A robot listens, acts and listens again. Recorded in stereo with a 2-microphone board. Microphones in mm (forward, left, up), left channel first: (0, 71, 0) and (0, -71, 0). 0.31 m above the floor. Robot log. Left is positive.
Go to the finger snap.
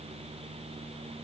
cmd idle
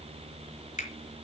note: The finger snap: about 55° left or 125° left.
cmd yaw +55
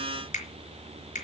note: So it is at 70° left.
cmd yaw +70
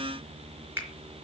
note: The finger snap is now 15° right.
cmd yaw -15
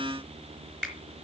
cmd fwd 1.0
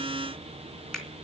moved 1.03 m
cmd fwd 1.0
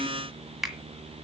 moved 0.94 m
cmd fwd 1.0
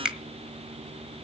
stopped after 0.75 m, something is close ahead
end: Arrived at the finger snap, straight ahead.